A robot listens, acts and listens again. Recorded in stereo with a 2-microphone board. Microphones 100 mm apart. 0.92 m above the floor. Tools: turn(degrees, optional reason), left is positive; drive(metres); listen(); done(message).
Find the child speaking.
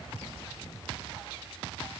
listen()
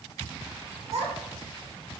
turn(degrees=-90)
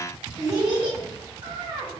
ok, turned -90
turn(degrees=-50, reason="So it is at 50° right.")
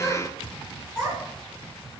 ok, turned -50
done("Found it: a child speaking, straight ahead.")